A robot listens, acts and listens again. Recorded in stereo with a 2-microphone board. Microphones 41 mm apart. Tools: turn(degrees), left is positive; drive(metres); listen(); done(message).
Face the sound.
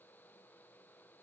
listen()
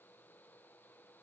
listen()
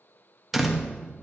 turn(degrees=-30)
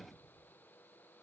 listen()
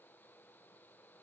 done("I heard a door slam, but can't make it out now. It was about 25° left or 145° right.")